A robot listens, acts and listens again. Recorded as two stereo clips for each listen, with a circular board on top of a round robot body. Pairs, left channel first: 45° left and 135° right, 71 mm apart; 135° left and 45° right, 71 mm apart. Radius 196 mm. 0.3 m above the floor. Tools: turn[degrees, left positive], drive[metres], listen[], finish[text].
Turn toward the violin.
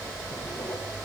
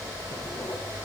Action: listen[]
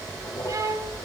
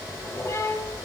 Thought: The violin: 175° right.
Action: turn[-175]
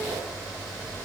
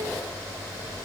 Action: listen[]
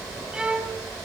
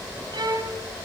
Thought: The violin is now 60° right.
Action: turn[-60]
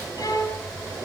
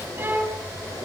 Thought: The violin is now 15° left.
Action: turn[15]
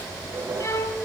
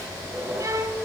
Action: finish[Facing the violin, 2 to 4 m away.]